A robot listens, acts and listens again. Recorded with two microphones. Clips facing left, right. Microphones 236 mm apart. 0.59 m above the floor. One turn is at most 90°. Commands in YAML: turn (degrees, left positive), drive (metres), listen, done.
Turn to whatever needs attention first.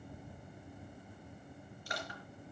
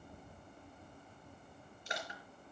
listen: true
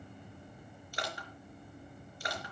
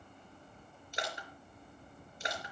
listen: true
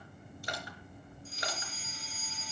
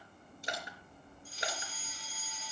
turn: 25
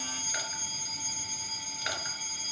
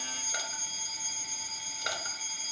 done: "Facing the fire alarm."